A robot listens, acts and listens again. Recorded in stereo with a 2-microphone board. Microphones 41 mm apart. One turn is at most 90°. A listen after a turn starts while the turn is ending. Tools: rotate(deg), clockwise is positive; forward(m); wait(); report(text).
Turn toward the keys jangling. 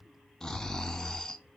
wait()
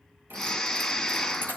rotate(60)
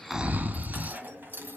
rotate(60)
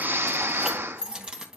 rotate(25)
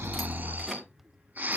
wait()
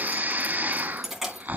report("Facing the keys jangling, 2 to 4 m away.")